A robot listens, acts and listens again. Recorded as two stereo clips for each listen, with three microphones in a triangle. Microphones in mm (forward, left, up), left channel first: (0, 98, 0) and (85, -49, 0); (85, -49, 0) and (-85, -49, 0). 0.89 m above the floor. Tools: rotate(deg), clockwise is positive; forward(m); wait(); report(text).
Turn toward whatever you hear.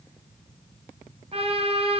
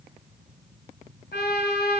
rotate(10)
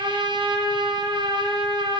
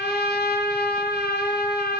report("Facing the trumpet.")